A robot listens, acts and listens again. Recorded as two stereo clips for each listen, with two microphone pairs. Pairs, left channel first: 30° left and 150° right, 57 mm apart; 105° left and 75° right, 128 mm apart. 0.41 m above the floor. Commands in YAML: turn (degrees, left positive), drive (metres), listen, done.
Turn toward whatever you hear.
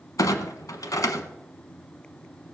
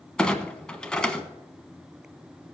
turn: 25
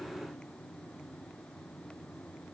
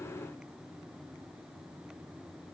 done: "I heard a clunk from this way, but can't make it out now."